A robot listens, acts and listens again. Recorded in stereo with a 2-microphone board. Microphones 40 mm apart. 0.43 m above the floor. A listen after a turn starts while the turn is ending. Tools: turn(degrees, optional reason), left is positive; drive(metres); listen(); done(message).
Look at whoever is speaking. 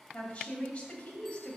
turn(degrees=30, reason="The woman speaking: about 30° left or 150° left.")
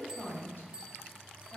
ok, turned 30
turn(degrees=115, reason="So it is at 115° left.")
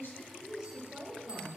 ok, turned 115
turn(degrees=-10, reason="The woman speaking is now 10° right.")
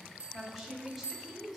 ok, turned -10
done("Found it: a woman speaking, straight ahead, 1 to 2 m away.")